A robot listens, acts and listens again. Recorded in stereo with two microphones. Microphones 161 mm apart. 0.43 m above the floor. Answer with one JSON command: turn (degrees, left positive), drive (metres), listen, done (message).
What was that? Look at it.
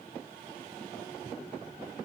{"listen": true}
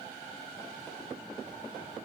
{"listen": true}
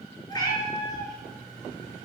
{"turn": 25}
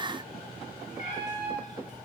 {"turn": 130}
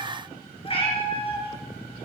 {"turn": 35}
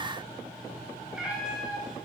{"done": "Facing the cat meowing, 2 to 4 m away."}